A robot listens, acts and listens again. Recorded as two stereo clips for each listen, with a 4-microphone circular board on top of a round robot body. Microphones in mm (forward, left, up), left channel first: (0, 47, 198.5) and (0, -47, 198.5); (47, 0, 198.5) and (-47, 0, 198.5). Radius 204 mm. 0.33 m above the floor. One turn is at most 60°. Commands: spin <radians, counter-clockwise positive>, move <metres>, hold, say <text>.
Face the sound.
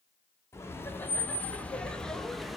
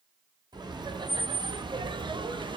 spin 1.05
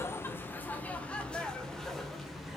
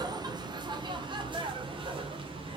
spin 1.05
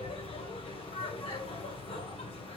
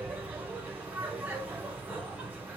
spin 1.05
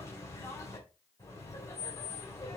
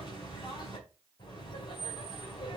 spin 0.52
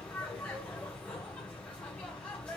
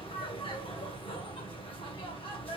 spin 0.17
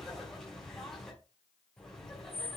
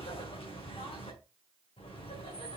say Facing the laughter.